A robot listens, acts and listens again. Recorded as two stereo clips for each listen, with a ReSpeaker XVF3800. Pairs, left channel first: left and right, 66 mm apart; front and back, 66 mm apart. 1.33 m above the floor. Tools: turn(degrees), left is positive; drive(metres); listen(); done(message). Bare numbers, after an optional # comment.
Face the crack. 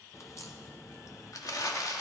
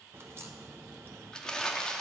# The crack: 130° left.
turn(130)
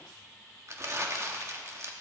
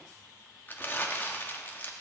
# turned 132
done("I heard a crack from this way, but can't make it out now.")